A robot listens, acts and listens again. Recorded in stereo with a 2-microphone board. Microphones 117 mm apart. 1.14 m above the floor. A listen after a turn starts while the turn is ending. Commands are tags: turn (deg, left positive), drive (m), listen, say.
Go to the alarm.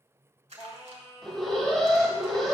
<turn deg="30"/>
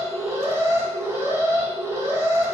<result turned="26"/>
<turn deg="-25"/>
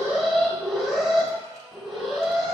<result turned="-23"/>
<drive m="1.0"/>
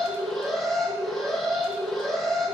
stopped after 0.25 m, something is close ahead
<say>Blocked. The alarm is further on, straight ahead.</say>